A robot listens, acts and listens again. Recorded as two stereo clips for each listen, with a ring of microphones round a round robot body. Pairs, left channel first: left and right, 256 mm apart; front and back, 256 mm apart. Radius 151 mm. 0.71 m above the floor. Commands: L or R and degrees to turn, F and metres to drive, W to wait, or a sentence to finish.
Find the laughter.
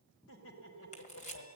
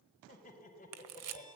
L60
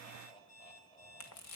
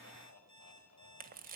L25
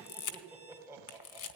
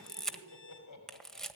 R10
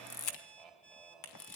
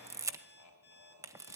Found it: laughter, straight ahead, over 4 m away.